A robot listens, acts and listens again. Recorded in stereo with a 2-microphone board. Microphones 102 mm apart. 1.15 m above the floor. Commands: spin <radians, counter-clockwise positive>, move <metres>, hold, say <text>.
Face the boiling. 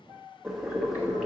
spin -0.52
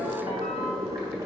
spin -2.53
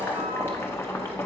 spin 0.44
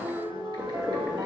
spin -0.17
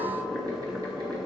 say Facing the boiling, 1 to 2 m away.